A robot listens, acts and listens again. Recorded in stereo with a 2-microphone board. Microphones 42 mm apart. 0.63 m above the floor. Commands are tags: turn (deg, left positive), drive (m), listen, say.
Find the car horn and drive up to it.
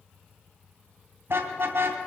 <turn deg="-70"/>
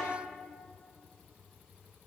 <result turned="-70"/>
<listen/>
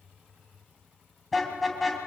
<drive m="1.0"/>
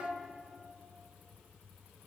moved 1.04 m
<listen/>
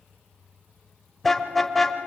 <drive m="1.0"/>
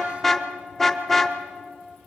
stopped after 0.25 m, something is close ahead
<turn deg="10"/>
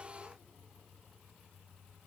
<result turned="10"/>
<listen/>
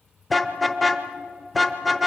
<say>Arrived at the car horn, straight ahead.</say>